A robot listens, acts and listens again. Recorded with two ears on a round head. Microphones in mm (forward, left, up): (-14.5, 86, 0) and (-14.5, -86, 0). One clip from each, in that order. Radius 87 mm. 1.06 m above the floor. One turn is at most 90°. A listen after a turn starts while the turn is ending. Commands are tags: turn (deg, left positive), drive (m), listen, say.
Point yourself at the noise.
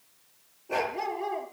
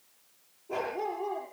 <turn deg="50"/>
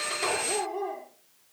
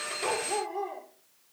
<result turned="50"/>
<say>Found it: a dog barking, straight ahead, over 4 m away.</say>